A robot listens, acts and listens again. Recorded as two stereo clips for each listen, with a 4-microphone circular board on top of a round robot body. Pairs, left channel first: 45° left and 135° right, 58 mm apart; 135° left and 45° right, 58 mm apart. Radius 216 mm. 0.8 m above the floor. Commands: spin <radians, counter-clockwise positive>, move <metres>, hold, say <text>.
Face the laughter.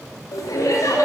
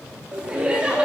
spin 0.44
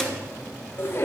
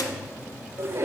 say Facing the laughter, 2 to 4 m away.